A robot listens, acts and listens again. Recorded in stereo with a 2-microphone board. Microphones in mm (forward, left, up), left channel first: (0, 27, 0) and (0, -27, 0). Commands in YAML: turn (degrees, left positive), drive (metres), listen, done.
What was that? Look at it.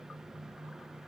listen: true
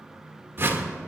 turn: -40
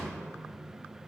listen: true
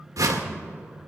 turn: -100
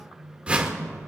turn: -20
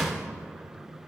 done: "Found it: a whoosh, straight ahead, 1 to 2 m away."